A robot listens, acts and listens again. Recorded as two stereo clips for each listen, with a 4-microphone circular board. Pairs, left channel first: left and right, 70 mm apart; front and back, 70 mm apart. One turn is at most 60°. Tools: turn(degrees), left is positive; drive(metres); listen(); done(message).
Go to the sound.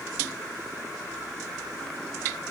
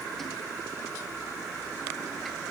listen()
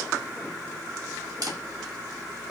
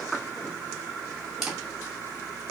turn(degrees=-60)
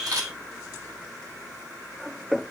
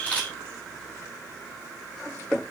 turn(degrees=-60)
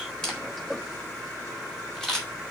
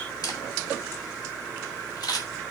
turn(degrees=10)
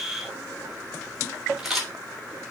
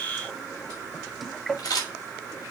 drive(metres=1.0)
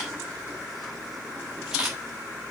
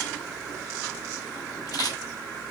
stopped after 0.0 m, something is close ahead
turn(degrees=-10)
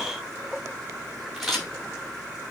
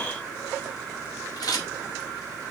done("Something is in my way. I am facing the camera shutter but have not reached it.")